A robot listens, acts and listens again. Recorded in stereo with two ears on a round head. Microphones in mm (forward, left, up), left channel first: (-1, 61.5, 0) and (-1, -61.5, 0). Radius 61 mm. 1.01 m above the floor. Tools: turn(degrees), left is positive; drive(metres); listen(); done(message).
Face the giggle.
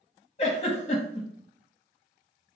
turn(degrees=45)
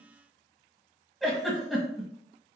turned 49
done("Facing the giggle, 1 to 2 m away.")